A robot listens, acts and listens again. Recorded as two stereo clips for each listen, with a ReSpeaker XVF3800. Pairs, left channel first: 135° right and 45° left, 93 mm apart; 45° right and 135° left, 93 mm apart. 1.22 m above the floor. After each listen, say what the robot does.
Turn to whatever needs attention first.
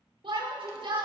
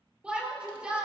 Turn 60° left.
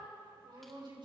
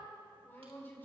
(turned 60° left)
Turn 20° left.
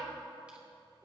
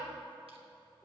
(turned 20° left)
Turn 10° left.
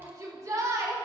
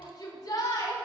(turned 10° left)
Found it: a shout, straight ahead, over 4 m away.